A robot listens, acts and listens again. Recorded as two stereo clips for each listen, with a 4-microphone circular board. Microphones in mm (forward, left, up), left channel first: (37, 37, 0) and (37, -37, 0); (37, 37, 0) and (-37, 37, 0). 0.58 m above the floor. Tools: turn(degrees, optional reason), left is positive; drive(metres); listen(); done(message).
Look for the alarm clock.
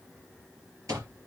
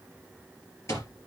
turn(degrees=-50, reason="The alarm clock: 50° right.")
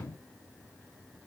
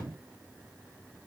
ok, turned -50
listen()
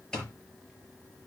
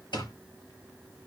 turn(degrees=10, reason="The alarm clock is now 10° left.")
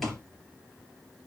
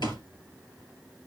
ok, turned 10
done("Facing the alarm clock, over 4 m away.")